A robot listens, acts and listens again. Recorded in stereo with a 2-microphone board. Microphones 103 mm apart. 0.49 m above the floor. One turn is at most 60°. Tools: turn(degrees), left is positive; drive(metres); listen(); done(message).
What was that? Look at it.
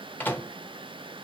turn(degrees=20)
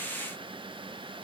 listen()
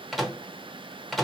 done("Facing the microwave.")